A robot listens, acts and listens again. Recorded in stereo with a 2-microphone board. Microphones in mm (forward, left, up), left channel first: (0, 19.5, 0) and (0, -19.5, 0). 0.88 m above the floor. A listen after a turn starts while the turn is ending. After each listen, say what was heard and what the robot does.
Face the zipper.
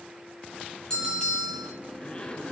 The zipper: about 35° left or 145° left. Turn 35° left.
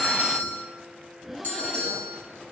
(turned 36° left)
Facing the zipper, 2 to 4 m away.